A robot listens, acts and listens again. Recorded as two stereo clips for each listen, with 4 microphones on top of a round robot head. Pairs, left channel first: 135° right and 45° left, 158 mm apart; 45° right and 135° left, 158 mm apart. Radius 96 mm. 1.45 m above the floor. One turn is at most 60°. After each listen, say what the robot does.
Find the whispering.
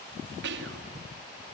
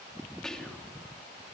Turn 40° left.
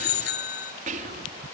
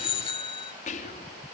Found it: whispering, straight ahead.